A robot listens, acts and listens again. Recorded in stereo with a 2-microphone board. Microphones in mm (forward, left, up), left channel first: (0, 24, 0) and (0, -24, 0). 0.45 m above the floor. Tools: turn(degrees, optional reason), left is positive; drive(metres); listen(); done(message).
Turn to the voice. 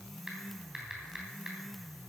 listen()
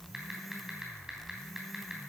listen()
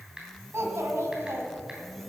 turn(degrees=-65, reason="The child speaking: about 65° right or 115° right.")
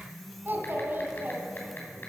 turn(degrees=-50, reason="So it is at 50° right.")
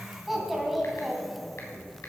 done("Found it: a child speaking, straight ahead, 2 to 4 m away.")